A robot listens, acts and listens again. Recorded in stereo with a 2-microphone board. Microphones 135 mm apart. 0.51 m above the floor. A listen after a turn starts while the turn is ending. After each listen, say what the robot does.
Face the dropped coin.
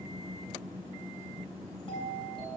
Keep listening.
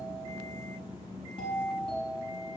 Keep listening.
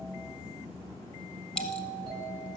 Turn 30° left.
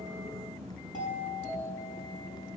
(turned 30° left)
Keep listening.
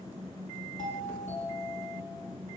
I heard a dropped coin, but can't make it out now. It was about 25° right or 145° left.